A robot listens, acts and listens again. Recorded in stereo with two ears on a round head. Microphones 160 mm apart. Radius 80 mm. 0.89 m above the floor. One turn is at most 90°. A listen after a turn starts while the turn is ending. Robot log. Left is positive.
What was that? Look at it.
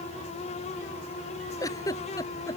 note: The giggle: about 20° left or 160° left.
cmd yaw +20
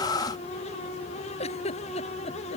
note: So it is at 140° left.
cmd yaw +90
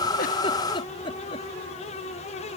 note: The giggle is now 30° left.
cmd yaw +30
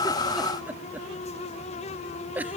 note: The giggle is now 10° right.
cmd yaw -10
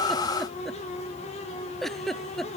end: Found it: a giggle, straight ahead.